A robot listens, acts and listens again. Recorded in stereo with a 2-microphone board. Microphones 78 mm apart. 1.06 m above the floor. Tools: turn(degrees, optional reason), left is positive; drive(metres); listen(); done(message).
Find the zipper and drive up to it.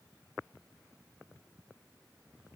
listen()
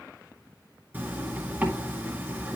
turn(degrees=-25, reason="The zipper: about 25° right or 155° right.")
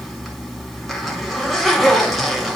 drive(metres=1.0)
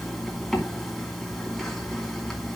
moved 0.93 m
drive(metres=1.0)
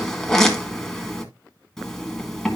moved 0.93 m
turn(degrees=10, reason="The zipper is now 10° left.")
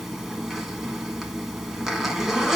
drive(metres=1.0)
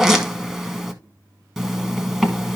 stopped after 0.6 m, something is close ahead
done("Arrived at the zipper, straight ahead.")